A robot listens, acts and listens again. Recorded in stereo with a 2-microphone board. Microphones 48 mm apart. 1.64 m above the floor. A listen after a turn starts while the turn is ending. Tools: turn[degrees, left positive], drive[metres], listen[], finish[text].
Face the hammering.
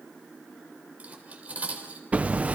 Thought: The hammering: about 30° right or 150° right.
Action: turn[-30]
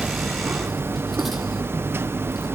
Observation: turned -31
Thought: So it is at 120° right.
Action: turn[-120]
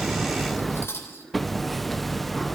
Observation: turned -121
Action: finish[Facing the hammering, under 1 m away.]